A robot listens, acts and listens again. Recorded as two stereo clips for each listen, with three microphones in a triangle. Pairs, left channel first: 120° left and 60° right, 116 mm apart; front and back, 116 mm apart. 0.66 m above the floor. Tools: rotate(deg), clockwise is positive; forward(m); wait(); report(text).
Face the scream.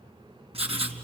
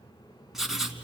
wait()
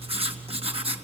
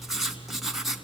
wait()
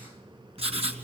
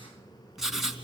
report("I can't make out a scream to turn to.")